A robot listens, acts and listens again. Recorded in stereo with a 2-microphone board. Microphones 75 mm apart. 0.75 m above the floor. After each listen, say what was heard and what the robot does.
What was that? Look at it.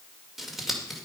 Turn 30° left.
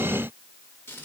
So it is at 150° left. Turn 150° left.
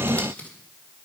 The scissors is now 20° left. Turn 20° left.
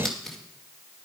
Found it: scissors, straight ahead.